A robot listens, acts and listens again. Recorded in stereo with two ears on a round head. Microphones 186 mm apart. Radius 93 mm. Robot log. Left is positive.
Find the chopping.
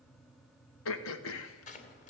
note: The chopping: about 35° left or 145° left.
cmd yaw +35
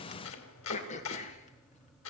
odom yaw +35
note: So it is at 110° left.
cmd yaw +110
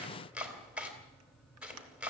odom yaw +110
end: Facing the chopping, 2 to 4 m away.